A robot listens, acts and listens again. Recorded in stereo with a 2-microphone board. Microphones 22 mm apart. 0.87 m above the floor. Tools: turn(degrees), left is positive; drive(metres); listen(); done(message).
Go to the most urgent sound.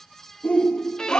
turn(degrees=70)
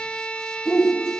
turn(degrees=35)
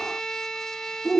drive(metres=1.0)
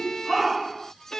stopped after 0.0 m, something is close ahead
turn(degrees=-10)
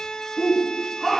done("Something is in my way. I am facing the shout but have not reached it.")